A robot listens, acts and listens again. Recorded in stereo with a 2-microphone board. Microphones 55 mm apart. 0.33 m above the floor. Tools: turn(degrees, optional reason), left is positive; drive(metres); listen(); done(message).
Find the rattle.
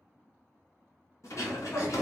turn(degrees=90)
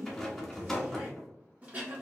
done("Found it: a rattle, straight ahead.")